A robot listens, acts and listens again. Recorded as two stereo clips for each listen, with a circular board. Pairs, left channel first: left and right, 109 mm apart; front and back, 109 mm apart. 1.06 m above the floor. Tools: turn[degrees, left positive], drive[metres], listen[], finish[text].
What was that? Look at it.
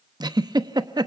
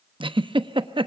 Thought: The giggle: 140° right.
Action: turn[-140]
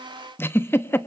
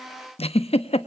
Thought: The giggle is now 20° left.
Action: turn[20]
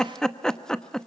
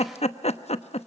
Action: finish[Facing the giggle.]